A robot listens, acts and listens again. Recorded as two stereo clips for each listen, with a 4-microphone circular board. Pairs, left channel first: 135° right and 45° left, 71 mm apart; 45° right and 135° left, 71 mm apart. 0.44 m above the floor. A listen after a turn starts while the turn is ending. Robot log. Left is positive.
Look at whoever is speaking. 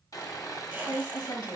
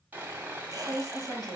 note: The woman speaking: 125° right.
cmd yaw -125
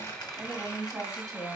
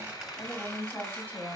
note: The woman speaking is now 15° left.
cmd yaw +15
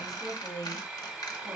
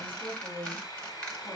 end: Facing the woman speaking, 2 to 4 m away.